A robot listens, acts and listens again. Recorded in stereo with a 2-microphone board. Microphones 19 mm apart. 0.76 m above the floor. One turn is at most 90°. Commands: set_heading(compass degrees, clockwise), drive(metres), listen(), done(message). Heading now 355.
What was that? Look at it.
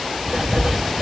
set_heading(45)
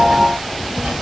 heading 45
set_heading(125)
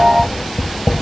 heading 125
done("Found it: writing, straight ahead, 2 to 4 m away.")